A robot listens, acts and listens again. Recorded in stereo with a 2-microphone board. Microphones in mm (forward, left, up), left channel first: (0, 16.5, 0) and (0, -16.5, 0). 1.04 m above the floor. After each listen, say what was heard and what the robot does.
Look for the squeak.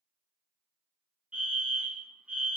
Keep listening.
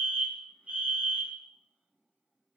Keep listening.
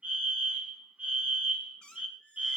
The squeak: about 30° left or 150° left. Turn 30° left.
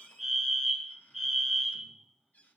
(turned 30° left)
So it is at 120° left. Turn 120° left.
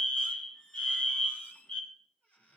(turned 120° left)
The squeak is now 55° left. Turn 55° left.
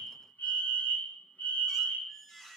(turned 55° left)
The squeak is now 15° left. Turn 15° left.
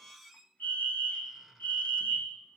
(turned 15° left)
Found it: a squeak, straight ahead.